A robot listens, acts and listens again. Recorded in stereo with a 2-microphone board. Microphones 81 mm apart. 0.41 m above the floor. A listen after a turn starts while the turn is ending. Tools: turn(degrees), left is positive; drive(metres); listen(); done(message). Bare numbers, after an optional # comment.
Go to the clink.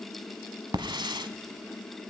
listen()
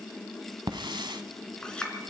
turn(30)
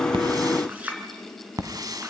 # So it is at 20° right.
turn(-20)
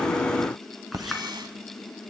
listen()
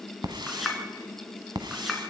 drive(1.0)
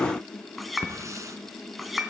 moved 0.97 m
drive(1.0)
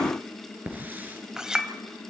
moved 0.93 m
# The clink is now 10° right.
turn(-10)
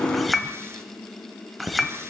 drive(1.0)
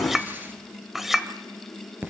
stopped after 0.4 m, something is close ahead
done("I am next to the clink.")